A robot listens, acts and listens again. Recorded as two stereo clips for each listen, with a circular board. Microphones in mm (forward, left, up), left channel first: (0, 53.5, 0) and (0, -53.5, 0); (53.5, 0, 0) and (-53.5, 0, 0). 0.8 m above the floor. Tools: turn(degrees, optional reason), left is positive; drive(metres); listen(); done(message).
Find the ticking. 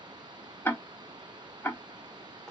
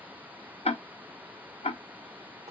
turn(degrees=20, reason="The ticking: 20° left.")
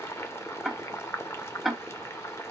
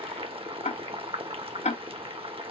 done("Found it: ticking, straight ahead.")